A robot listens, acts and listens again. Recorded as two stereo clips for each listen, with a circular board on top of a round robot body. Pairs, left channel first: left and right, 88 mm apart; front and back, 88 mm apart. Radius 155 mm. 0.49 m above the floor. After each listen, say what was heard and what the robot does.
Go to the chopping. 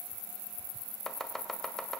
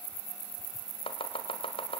Drive 1.0 m forward.
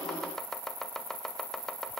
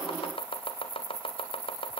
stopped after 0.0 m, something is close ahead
Something is in my way. I am facing the chopping but have not reached it.